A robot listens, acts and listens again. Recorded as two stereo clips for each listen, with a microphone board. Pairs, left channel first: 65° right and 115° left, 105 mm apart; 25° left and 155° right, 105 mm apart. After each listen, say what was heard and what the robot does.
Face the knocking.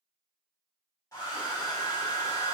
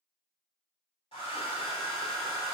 Keep listening.
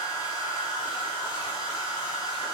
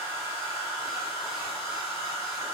Keep listening.
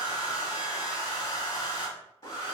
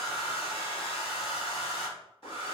I can't make out knocking to turn to.